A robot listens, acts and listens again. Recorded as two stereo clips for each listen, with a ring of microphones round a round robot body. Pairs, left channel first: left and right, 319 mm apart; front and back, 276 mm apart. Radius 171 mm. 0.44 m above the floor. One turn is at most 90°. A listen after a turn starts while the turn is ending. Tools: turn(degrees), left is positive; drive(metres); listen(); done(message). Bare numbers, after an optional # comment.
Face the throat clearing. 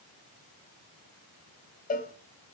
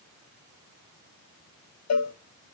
listen()
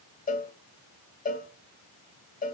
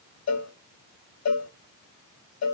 listen()
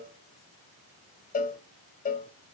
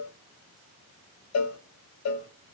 done("I can't make out throat clearing, only a cowbell.")